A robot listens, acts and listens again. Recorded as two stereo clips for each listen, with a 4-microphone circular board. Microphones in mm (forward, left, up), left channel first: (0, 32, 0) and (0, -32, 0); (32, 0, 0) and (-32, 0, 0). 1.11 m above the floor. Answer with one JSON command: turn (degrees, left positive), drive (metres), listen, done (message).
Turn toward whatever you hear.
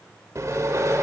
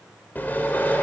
{"turn": -60}
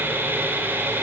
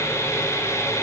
{"turn": -35}
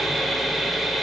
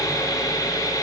{"done": "Facing the sawing, 2 to 4 m away."}